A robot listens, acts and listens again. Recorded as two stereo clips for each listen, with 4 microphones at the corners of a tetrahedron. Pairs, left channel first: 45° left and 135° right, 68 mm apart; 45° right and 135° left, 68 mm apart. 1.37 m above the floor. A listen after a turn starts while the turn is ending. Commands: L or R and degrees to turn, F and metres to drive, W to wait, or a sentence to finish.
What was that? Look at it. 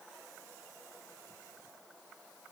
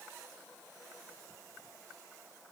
W
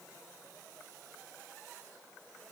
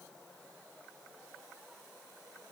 W
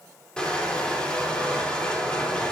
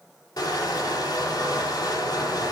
R30
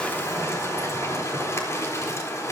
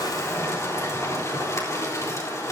Facing the crushing.